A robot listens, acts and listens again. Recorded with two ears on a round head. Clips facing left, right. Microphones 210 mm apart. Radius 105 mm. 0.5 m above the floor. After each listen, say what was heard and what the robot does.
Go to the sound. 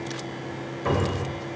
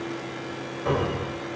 The cupboard door: about 30° left or 150° left. Turn 30° left.
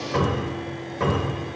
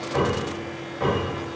So it is at 115° left. Turn 115° left.
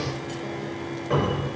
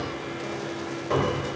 The cupboard door is now 25° left. Turn 25° left.
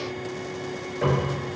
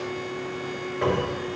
Drive 1.0 m forward.
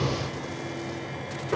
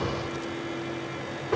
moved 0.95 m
Drive 1.0 m forward.
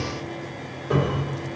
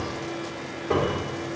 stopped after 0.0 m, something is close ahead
Arrived at the cupboard door, straight ahead.